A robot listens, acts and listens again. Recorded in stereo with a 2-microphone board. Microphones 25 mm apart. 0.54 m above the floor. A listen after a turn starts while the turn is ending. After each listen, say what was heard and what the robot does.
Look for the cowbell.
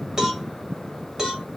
The cowbell: about 30° right or 150° right. Turn 30° right.
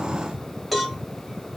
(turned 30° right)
Found it: a cowbell, straight ahead.